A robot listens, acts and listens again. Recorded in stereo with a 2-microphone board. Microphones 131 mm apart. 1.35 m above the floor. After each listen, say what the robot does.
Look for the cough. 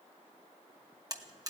Keep listening.
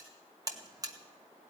Keep listening.
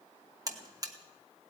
I can't make out a cough, only a buzzer.